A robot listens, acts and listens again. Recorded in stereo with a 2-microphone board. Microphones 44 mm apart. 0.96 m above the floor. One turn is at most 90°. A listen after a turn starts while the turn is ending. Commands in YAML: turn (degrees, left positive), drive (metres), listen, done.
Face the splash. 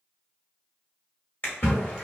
turn: 55
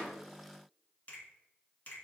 listen: true
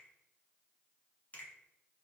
done: "I heard a splash, but can't make it out now. It was about straight ahead or 70° left."